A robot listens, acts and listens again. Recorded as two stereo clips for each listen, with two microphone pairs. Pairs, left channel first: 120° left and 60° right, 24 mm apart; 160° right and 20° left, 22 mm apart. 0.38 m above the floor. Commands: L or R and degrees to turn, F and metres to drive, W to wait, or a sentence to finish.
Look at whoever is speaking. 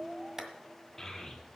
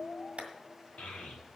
R160
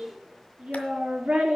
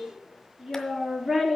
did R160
R45
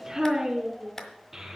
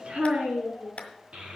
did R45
L15
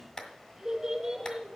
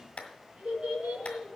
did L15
Facing the child speaking, 2 to 4 m away.